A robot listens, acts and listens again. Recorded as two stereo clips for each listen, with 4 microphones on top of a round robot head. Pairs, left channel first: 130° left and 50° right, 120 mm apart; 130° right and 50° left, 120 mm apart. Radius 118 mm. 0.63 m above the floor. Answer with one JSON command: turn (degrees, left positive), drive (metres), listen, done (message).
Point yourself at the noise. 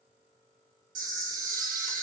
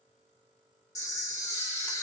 {"turn": -65}
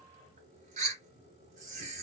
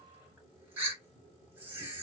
{"turn": -25}
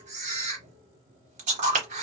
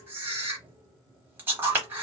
{"turn": -25}
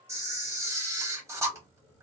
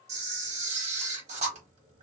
{"turn": 20}
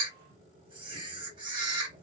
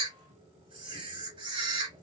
{"done": "Facing the camera shutter, under 1 m away."}